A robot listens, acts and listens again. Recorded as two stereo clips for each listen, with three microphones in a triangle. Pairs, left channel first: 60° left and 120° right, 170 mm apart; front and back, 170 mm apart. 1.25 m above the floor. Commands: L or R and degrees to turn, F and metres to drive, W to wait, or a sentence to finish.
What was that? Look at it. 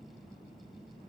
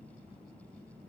W
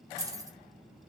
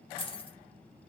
R50
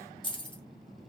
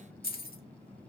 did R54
Facing the keys jangling.